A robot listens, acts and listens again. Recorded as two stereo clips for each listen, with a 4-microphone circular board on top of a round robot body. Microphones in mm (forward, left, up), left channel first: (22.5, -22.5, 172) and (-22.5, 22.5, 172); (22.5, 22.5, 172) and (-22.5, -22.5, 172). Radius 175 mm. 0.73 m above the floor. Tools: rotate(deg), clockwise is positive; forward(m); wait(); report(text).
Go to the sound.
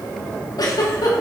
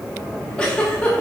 rotate(30)
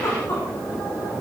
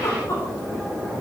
forward(1.0)
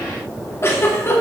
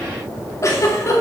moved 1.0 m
forward(1.0)
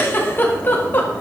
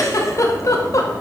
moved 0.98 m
rotate(-15)
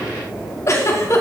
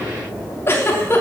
forward(1.0)
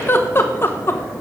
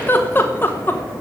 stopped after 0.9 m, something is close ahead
report("Arrived at the giggle, straight ahead.")